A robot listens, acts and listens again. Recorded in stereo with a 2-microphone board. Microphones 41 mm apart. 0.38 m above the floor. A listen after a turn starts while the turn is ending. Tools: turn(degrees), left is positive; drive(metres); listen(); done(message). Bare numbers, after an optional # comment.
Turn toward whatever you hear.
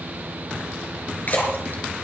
# The splash: about 55° left or 125° left.
turn(55)
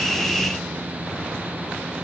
listen()
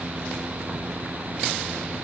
done("I heard a splash, but can't make it out now. It was about straight ahead or 70° left.")